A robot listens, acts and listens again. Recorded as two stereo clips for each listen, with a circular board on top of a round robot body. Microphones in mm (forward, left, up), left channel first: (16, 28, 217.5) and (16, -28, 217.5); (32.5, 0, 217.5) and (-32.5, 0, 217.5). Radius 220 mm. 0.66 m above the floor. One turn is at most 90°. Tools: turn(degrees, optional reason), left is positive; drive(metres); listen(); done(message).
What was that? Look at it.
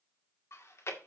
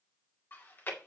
turn(degrees=55, reason="The chewing: 55° left.")
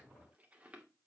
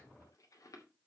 turn(degrees=-25, reason="The chewing is now 25° right.")
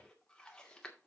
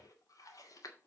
turn(degrees=15, reason="The chewing is now 15° left.")
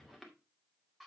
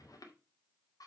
done("Found it: chewing, straight ahead.")